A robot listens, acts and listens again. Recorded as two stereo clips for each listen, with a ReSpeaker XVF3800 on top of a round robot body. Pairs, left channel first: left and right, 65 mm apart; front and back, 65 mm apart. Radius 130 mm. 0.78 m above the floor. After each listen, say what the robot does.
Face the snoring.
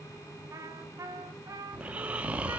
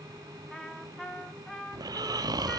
Turn 160° right.
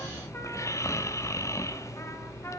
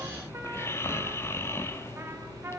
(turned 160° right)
Turn 55° left.
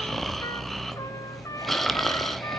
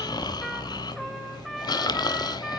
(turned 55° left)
Found it: snoring, straight ahead, 1 to 2 m away.